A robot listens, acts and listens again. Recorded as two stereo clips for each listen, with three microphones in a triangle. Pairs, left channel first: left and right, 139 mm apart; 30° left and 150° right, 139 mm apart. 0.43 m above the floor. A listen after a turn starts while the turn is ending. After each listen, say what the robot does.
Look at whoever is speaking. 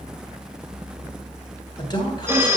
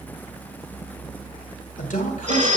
Turn 35° left.
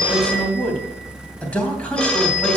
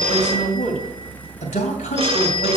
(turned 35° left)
Turn 10° left.
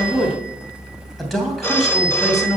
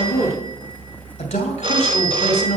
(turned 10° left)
Facing the man speaking.